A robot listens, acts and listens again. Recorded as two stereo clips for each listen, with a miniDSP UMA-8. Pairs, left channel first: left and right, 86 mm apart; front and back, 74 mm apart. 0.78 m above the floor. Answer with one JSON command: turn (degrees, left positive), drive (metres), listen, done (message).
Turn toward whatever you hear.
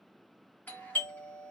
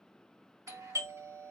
{"turn": 155}
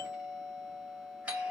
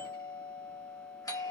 {"turn": -15}
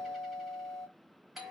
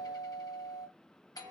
{"done": "Facing the doorbell."}